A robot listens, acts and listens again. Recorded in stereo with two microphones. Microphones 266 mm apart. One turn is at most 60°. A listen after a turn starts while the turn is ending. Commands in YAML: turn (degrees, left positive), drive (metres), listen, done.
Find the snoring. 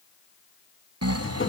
turn: -60
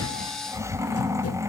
turn: -10
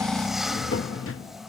done: "Facing the snoring, under 1 m away."